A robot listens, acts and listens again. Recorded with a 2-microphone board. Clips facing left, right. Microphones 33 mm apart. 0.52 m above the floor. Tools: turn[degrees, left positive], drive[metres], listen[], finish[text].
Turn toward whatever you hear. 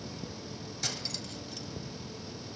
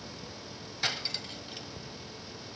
Thought: The cutlery clinking: about 35° right or 145° right.
Action: turn[-35]
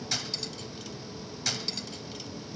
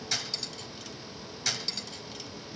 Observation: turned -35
Action: finish[Facing the cutlery clinking.]